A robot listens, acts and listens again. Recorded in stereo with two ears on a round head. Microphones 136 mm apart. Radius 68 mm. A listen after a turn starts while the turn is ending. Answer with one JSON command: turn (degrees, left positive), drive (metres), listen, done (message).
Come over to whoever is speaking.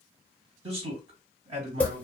{"turn": -40}
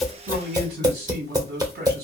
{"turn": -100}
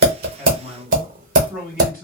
{"turn": -10}
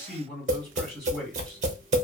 {"drive": 1.0}
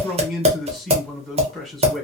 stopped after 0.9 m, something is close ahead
{"done": "Arrived at the man speaking, straight ahead."}